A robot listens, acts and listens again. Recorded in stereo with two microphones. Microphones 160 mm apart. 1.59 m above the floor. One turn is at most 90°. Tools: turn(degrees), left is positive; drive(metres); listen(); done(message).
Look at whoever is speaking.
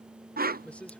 turn(degrees=30)
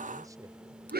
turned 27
listen()
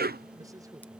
listen()
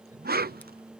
done("I heard a man speaking, but can't make it out now. It was about 20° right or 145° left.")